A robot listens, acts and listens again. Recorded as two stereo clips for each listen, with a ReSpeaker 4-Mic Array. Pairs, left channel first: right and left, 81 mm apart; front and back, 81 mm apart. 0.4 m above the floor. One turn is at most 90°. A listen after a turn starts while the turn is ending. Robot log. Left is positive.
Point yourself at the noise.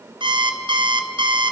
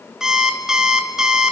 note: The alarm clock: 95° left.
cmd yaw +90
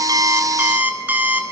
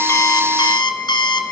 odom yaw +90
note: The alarm clock is now 20° left.
cmd yaw +20
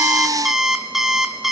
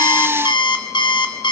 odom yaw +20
end: Facing the alarm clock, 2 to 4 m away.